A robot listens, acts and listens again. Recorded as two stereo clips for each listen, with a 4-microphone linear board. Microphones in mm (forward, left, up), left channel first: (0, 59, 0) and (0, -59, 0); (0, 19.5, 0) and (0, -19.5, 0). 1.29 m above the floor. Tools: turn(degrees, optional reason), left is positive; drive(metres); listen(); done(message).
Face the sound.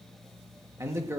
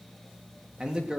turn(degrees=-20, reason="The man speaking: about 20° right or 160° right.")
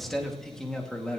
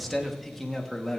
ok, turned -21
turn(degrees=10, reason="So it is at 10° left.")
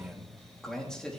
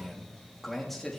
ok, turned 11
turn(degrees=10, reason="The man speaking is now 10° left.")
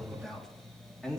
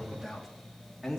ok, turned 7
done("Facing the man speaking.")